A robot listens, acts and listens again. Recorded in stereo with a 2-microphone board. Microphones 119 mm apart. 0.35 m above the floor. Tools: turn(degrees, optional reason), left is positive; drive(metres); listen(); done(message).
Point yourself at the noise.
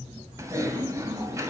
turn(degrees=-25, reason="The typing on a keyboard: about 25° right or 155° right.")
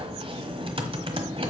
turn(degrees=-125, reason="So it is at 125° right.")
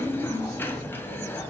turn(degrees=20, reason="The typing on a keyboard is now 20° left.")
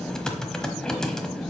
done("Facing the typing on a keyboard, 1 to 2 m away.")